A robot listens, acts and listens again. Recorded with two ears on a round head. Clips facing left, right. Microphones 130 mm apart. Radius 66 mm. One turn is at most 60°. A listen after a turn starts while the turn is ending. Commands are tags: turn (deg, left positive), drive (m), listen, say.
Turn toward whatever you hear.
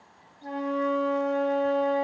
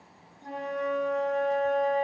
<turn deg="45"/>
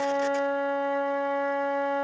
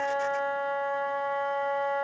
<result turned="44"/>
<turn deg="60"/>
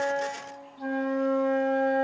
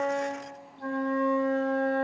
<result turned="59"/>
<turn deg="30"/>
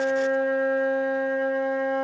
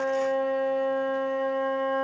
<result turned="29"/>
<say>Found it: a flute, straight ahead.</say>